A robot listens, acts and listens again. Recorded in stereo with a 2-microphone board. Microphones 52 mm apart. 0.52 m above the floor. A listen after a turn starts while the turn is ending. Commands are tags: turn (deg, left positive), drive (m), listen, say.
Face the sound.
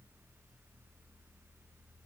<listen/>
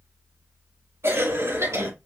<turn deg="-65"/>
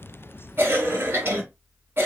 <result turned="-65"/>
<turn deg="-45"/>
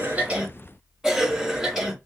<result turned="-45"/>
<say>Found it: a cough, straight ahead, 2 to 4 m away.</say>